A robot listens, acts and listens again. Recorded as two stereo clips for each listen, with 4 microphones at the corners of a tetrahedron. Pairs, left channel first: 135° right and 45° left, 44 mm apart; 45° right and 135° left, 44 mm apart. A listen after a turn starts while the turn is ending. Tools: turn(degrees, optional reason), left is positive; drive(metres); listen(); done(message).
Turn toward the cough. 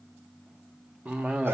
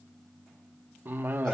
turn(degrees=100, reason="The cough: 100° left.")
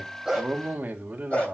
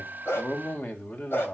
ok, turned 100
done("Facing the cough.")